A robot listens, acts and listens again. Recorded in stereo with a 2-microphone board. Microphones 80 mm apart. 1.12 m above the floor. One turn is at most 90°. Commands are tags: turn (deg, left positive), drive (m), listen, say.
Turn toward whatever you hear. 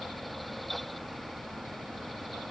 <listen/>
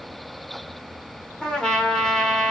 <turn deg="30"/>
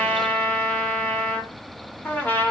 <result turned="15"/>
<turn deg="90"/>
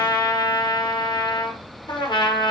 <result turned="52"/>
<turn deg="90"/>
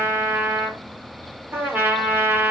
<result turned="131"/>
<turn deg="-30"/>
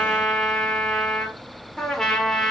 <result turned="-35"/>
<say>Found it: a trumpet, straight ahead.</say>